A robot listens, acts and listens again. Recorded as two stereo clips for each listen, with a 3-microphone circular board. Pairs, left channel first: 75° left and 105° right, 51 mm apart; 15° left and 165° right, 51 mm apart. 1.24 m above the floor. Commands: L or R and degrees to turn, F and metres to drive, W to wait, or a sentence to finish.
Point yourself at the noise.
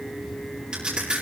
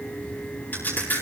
R30
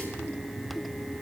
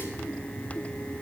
I heard a crack from this way, but can't make it out now.